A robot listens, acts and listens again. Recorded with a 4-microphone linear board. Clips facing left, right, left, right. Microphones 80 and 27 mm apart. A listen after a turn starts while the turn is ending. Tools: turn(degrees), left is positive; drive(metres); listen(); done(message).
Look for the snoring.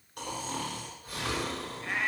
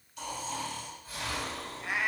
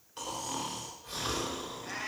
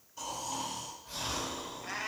turn(degrees=60)
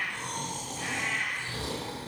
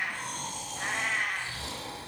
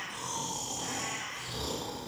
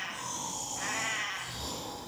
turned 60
turn(degrees=60)
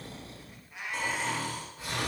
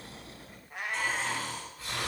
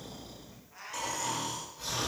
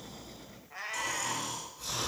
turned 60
turn(degrees=20)
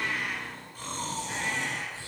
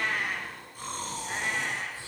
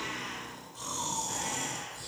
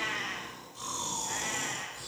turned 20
done("Facing the snoring, 2 to 4 m away.")